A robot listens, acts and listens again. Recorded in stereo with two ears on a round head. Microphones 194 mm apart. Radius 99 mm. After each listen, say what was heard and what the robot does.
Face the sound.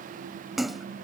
Turn 30° left.
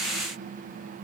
Keep listening.
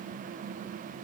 I heard a splash, but can't make it out now. It was about 30° right or 150° left.